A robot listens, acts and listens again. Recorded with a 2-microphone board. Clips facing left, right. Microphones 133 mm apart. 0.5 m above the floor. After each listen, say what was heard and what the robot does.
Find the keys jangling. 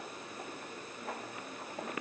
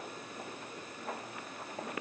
Keep listening.
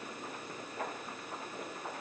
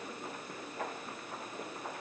Keep listening.
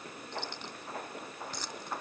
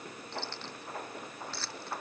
The keys jangling: about 15° left or 165° left. Turn 15° left.
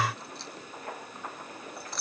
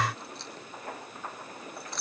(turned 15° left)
Turn 30° left.
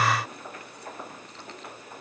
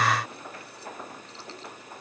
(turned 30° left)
Keep listening.
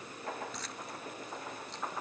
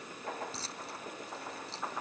So it is at 30° right. Turn 30° right.
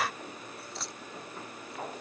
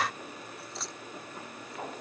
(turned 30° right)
Facing the keys jangling.